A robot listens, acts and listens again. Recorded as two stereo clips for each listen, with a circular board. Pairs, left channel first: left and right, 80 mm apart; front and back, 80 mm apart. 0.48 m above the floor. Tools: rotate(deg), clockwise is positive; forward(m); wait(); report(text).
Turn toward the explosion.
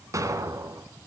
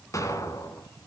rotate(45)
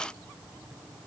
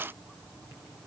report("Facing where the explosion came from. I can't hear it now.")